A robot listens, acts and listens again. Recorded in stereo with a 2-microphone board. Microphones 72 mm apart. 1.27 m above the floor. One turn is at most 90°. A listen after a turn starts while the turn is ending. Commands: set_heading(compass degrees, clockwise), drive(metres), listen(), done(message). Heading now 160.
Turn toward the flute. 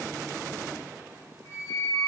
set_heading(120)
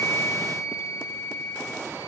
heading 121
set_heading(31)
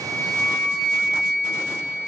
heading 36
set_heading(21)
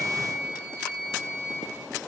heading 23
done("Facing the flute.")